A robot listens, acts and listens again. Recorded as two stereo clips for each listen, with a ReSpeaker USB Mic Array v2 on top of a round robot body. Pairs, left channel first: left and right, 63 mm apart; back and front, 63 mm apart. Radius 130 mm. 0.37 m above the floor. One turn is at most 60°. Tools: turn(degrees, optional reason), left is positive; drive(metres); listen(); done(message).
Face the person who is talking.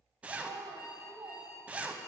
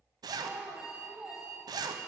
turn(degrees=-60, reason="The child speaking: 70° right.")
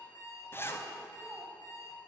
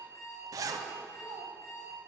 turn(degrees=-10, reason="Nothing new. It was at 10° right.")
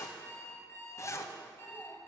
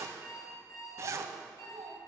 done("Facing the child speaking, 2 to 4 m away.")